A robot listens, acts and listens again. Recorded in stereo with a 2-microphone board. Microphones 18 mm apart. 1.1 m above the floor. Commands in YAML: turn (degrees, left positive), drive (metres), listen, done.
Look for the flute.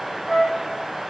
turn: -35
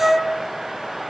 turn: -105
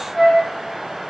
turn: 15
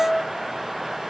turn: 10
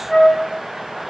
done: "Found it: a flute, straight ahead, 1 to 2 m away."